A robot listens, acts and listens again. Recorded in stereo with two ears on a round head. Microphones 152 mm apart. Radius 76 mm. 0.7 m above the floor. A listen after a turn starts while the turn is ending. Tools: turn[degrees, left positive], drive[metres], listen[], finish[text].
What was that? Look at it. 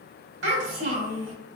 Action: turn[-90]
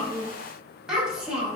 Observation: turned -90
Action: finish[Facing the child speaking, 1 to 2 m away.]